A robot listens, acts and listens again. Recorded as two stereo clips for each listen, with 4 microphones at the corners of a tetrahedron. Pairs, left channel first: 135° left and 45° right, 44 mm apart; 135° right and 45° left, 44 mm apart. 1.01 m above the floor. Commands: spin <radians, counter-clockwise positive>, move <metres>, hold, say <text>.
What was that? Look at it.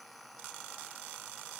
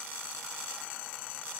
hold
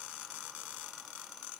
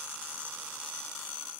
hold
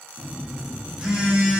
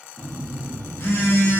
spin -2.09
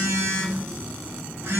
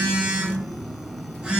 spin -0.44
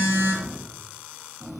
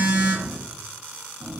spin -0.17
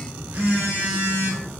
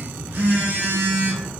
say Found it: a phone buzzing, straight ahead.